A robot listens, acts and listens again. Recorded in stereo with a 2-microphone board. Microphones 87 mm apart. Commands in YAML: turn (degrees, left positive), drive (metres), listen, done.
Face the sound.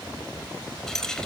turn: 30
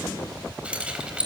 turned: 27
turn: -10
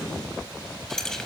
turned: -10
turn: 10
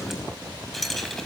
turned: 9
done: "Found it: keys jangling, straight ahead."